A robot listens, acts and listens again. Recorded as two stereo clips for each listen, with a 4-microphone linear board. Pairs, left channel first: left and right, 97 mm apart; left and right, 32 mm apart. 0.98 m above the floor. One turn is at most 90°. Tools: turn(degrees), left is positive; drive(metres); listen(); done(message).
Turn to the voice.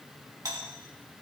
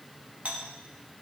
listen()
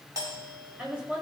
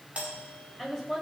turn(degrees=-15)
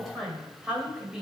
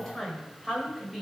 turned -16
turn(degrees=-30)
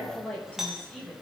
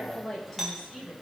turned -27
turn(degrees=10)
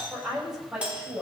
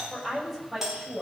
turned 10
turn(degrees=-10)
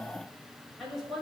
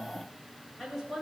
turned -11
done("Facing the woman speaking.")